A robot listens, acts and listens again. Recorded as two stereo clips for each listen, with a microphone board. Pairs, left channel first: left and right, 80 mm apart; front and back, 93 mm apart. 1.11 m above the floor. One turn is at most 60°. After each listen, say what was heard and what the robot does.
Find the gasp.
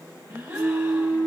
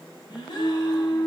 The gasp: 15° right. Turn 15° right.
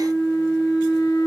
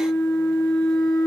I heard a gasp from this way, but can't make it out now.